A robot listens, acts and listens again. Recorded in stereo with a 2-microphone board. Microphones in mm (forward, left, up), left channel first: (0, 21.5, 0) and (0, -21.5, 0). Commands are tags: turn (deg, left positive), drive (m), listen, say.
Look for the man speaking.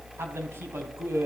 <turn deg="-70"/>
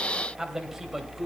<turn deg="-10"/>
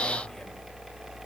<listen/>
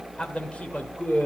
<turn deg="40"/>
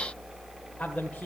<listen/>
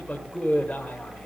<turn deg="40"/>
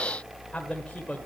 <turn deg="30"/>
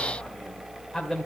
<turn deg="10"/>
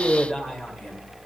<say>Found it: a man speaking, straight ahead, 1 to 2 m away.</say>